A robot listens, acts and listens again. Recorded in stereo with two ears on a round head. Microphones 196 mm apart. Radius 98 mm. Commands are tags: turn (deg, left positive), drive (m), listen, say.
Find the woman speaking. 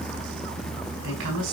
<turn deg="-90"/>
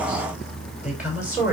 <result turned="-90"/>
<turn deg="-10"/>
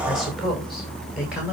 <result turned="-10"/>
<say>Facing the woman speaking, over 4 m away.</say>